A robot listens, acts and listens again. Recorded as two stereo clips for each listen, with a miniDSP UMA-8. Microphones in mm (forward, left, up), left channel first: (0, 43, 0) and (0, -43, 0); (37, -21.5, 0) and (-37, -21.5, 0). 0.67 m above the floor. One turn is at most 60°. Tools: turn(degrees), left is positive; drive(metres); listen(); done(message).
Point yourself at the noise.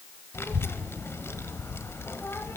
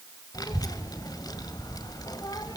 turn(degrees=30)
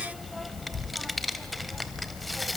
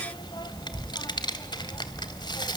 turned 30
done("Facing the child speaking, 1 to 2 m away.")